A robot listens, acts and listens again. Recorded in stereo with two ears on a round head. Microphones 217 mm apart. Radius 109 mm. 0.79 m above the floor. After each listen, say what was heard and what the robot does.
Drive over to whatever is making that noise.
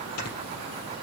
The snoring: about 70° left or 110° left. Turn 70° left.
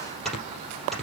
Drive 1.0 m forward.
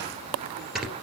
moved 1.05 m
Drive 1.0 m forward.
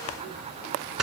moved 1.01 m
Drive 1.0 m forward.
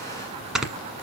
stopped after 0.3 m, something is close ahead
I am next to the snoring.